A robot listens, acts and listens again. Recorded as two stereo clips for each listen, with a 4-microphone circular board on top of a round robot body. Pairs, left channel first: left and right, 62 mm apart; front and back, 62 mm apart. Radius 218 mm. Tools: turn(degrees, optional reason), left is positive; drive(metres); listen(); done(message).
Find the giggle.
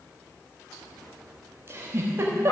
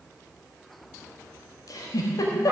turn(degrees=-35, reason="The giggle: 35° right.")
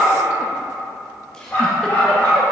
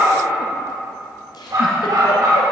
listen()
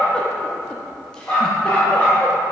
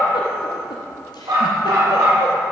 listen()
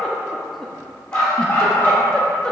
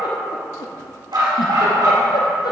turn(degrees=10, reason="The giggle is now 10° left.")
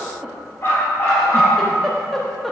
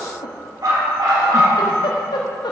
done("Found it: a giggle, straight ahead.")